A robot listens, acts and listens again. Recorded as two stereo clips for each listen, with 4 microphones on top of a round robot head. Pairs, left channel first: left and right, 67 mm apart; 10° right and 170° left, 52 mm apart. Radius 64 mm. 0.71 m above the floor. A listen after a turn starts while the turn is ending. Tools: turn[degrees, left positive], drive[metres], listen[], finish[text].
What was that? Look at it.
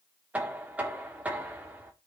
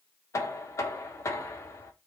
Thought: The knocking: 20° right.
Action: turn[-20]
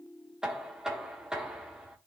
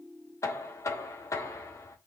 Thought: The knocking is now 10° right.
Action: turn[-10]
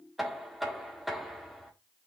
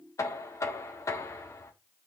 Action: finish[Facing the knocking, 1 to 2 m away.]